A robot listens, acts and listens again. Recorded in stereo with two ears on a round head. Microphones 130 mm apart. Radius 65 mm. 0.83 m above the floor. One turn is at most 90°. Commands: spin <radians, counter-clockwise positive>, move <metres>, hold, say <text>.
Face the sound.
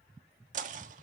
spin -0.96
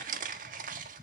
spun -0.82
spin -1.22
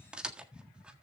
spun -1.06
say Found it: knocking, straight ahead.